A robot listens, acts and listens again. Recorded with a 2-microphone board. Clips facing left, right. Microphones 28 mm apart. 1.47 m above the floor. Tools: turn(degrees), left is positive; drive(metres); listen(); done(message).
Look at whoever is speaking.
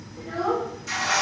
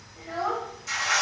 turn(degrees=-40)
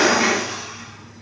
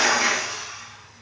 listen()
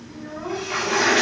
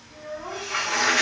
done("Facing the child speaking, 1 to 2 m away.")